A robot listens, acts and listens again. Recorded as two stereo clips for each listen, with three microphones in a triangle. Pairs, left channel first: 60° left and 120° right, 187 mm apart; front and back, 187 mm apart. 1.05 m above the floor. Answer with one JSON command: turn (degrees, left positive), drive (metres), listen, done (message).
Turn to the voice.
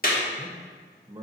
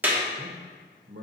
{"turn": 170}
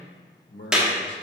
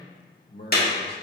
{"turn": 35}
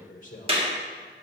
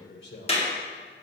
{"turn": 15}
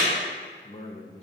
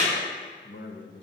{"done": "Found it: a man speaking, straight ahead, under 1 m away."}